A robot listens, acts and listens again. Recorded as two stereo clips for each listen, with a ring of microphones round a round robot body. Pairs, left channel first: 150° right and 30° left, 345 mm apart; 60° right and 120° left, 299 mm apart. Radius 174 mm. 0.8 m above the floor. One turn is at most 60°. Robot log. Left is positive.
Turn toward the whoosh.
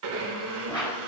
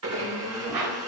note: The whoosh: 130° left.
cmd yaw +60
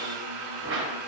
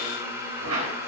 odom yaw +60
note: The whoosh is now 90° left.
cmd yaw +60
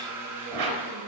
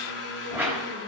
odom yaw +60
note: The whoosh is now 35° left.
cmd yaw +35
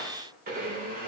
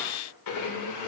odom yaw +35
cmd idle
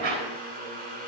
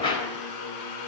note: The whoosh is now 15° left.
cmd yaw +15
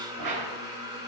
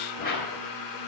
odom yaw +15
end: Found it: a whoosh, straight ahead, over 4 m away.